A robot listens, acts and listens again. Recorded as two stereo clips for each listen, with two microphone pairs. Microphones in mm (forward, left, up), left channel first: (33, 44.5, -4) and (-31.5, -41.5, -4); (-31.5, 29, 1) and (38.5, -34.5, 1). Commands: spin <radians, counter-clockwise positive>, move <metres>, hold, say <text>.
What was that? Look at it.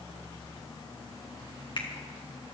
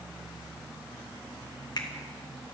spin 1.66
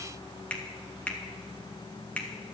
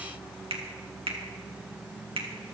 spin -0.44
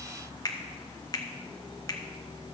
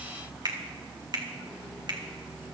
say Facing the finger snap, 1 to 2 m away.